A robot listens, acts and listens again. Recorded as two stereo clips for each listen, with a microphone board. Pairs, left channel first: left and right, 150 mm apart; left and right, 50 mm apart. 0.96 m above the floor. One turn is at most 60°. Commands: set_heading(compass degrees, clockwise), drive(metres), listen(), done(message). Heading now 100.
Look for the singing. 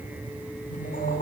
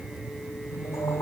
set_heading(40)
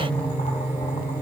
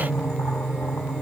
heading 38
set_heading(23)
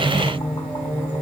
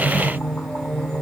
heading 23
set_heading(13)
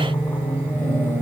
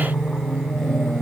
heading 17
set_heading(7)
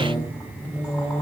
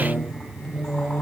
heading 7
set_heading(357)
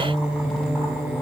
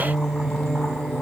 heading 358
done("Found it: singing, straight ahead.")